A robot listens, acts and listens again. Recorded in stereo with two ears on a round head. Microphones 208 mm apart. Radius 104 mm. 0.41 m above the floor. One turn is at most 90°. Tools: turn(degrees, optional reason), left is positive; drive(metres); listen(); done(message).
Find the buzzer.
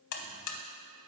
turn(degrees=90)
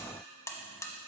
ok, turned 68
turn(degrees=15, reason="So it is at 15° left.")
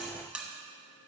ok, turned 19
done("Found it: a buzzer, straight ahead, under 1 m away.")